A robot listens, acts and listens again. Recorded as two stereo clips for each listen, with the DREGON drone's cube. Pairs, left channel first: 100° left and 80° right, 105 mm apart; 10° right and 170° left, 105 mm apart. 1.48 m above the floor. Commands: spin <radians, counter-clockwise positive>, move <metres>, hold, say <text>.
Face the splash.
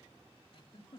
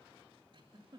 hold
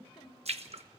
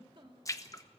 spin -1.22
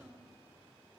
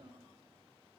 say I heard a splash from this way, but can't make it out now.